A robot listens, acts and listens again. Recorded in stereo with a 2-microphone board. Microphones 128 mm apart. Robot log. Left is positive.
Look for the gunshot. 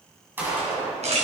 cmd yaw -30
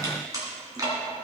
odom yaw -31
cmd idle
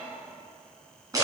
end: I heard a gunshot, but can't make it out now. It was about 15° left or 135° right.